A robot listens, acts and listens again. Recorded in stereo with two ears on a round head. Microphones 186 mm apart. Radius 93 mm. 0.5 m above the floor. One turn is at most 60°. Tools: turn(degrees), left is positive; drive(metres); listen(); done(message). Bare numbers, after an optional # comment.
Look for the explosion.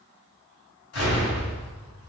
turn(60)
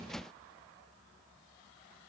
# Nothing new. It was at 30° left.
turn(30)
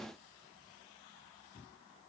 done("Facing where the explosion came from. I can't hear it now.")